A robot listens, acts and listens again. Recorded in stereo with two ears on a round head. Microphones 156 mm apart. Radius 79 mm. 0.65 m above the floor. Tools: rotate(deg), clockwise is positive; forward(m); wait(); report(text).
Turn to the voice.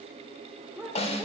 rotate(30)
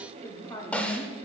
rotate(-20)
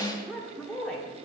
report("Facing the woman speaking, 1 to 2 m away.")